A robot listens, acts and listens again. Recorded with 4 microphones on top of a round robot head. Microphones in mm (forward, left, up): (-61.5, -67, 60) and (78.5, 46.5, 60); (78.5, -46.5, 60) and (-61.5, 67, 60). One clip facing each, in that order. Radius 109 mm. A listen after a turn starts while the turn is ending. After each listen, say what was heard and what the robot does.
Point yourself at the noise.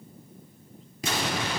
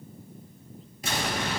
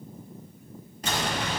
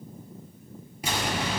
The explosion: 140° right. Turn 140° right.
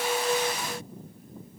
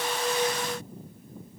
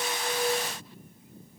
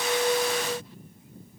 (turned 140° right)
I heard an explosion from this way, but can't make it out now.